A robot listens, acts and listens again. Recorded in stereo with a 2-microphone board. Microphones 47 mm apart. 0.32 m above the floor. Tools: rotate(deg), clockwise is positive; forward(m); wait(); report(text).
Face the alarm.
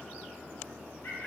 wait()
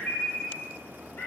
wait()
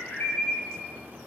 report("I can't make out an alarm, only a bird.")